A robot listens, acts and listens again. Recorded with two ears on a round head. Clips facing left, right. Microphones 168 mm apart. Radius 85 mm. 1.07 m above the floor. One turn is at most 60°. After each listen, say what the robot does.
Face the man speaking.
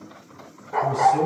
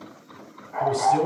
Turn 60° right.
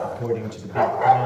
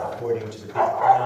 Facing the man speaking, 2 to 4 m away.